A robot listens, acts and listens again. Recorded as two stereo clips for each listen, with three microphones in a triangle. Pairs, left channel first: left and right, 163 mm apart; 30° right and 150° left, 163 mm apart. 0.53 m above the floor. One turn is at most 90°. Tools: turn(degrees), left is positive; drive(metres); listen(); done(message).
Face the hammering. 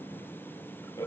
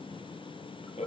listen()
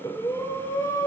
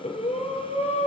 listen()
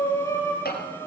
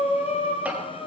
turn(degrees=70)
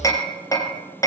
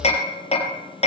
turn(degrees=20)
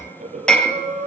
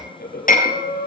done("Found it: hammering, straight ahead.")